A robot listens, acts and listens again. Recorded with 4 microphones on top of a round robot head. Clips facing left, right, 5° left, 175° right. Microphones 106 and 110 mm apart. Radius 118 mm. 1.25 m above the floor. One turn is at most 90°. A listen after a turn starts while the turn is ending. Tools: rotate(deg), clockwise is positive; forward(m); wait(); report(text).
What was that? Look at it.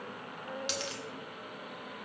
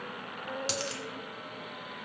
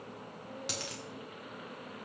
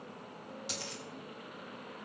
rotate(45)
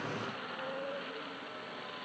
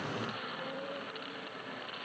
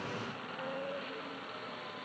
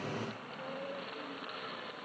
report("I heard a dropped coin from this way, but can't make it out now.")